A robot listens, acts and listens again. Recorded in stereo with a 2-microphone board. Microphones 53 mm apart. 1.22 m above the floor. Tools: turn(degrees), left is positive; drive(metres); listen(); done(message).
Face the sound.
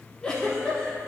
turn(degrees=20)
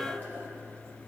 listen()
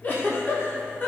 turn(degrees=140)
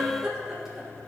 turn(degrees=-10)
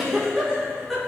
done("Found it: a giggle, straight ahead, 1 to 2 m away.")